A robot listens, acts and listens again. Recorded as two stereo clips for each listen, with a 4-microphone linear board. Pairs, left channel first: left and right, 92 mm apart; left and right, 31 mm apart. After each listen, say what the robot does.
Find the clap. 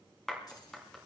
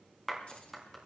Turn 30° left.
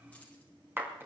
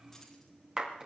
Turn 25° right.
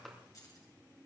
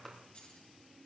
Keep listening.
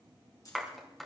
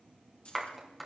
Found it: a clap, straight ahead, 2 to 4 m away.